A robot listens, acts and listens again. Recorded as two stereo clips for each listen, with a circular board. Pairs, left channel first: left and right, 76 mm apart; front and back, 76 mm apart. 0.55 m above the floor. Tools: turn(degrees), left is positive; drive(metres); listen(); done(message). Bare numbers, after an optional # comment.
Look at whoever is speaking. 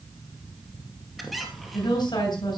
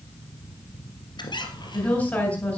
# The woman speaking: 75° left.
turn(75)
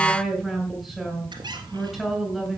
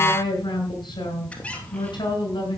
done("Found it: a woman speaking, straight ahead.")